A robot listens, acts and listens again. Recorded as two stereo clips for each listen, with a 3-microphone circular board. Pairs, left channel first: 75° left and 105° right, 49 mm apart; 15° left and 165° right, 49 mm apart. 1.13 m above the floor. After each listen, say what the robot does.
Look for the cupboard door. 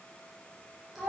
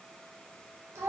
Keep listening.
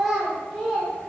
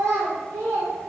Keep listening.
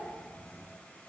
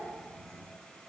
I can't make out a cupboard door, only a child speaking.